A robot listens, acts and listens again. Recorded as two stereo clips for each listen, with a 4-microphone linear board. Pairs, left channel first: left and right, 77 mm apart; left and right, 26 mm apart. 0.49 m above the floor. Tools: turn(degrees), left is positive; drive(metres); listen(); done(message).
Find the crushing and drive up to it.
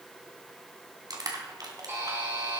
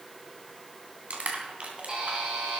turn(degrees=-55)
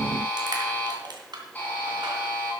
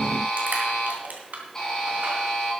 turn(degrees=-70)
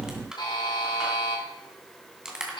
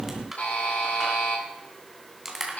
turn(degrees=-10)
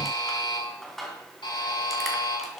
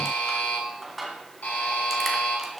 drive(metres=1.0)
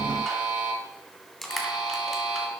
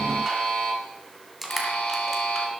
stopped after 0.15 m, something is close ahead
done("Blocked. The crushing is further on, straight ahead.")